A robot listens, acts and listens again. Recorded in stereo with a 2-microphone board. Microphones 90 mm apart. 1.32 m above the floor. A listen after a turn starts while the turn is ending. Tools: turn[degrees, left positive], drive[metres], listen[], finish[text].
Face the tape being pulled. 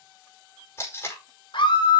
Thought: The tape being pulled: about 30° left or 150° left.
Action: turn[30]
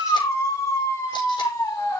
Action: listen[]
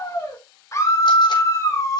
Action: listen[]
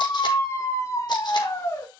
Action: finish[I heard tape being pulled, but can't make it out now. It was about straight ahead or 120° left.]